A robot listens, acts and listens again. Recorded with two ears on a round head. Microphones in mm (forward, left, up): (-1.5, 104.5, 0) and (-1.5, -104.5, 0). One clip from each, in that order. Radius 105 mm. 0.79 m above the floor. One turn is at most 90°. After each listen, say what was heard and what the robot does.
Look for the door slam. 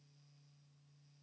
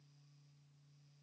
Keep listening.
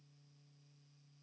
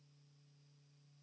Keep listening.
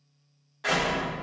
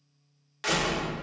The door slam: about 65° right or 115° right. Turn 65° right.
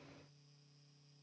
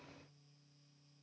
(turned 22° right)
Keep listening.
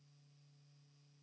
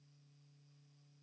I heard a door slam, but can't make it out now. It was about 45° right or 90° right.